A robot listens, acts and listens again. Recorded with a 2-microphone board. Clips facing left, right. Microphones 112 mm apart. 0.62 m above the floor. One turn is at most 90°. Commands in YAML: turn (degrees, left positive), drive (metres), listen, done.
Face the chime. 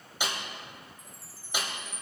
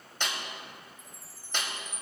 turn: 35
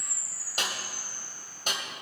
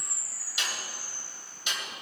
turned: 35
done: "Facing the chime, 1 to 2 m away."